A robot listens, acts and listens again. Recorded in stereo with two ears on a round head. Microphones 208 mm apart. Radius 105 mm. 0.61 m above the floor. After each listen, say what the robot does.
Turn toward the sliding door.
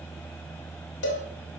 Keep listening.
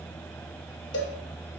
Keep listening.
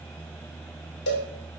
I can't make out a sliding door, only a cowbell.